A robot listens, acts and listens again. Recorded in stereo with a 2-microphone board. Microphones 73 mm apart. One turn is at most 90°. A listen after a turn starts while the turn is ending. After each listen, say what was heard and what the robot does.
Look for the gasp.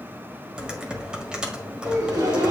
The gasp: about 65° right or 115° right. Turn 65° right.
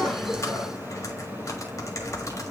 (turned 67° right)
Keep listening.
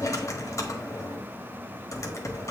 I heard a gasp, but can't make it out now. It was about 5° left or 50° right.